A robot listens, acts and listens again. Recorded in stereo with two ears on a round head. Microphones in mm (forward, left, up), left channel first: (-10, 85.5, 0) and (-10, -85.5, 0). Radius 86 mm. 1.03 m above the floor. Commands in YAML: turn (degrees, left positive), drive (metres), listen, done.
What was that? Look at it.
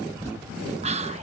turn: -35
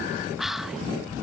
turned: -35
done: "Facing the whispering."